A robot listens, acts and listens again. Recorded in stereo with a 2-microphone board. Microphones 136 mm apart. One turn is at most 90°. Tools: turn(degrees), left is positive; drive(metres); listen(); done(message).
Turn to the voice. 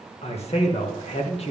turn(degrees=50)
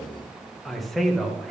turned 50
done("Facing the man speaking, 1 to 2 m away.")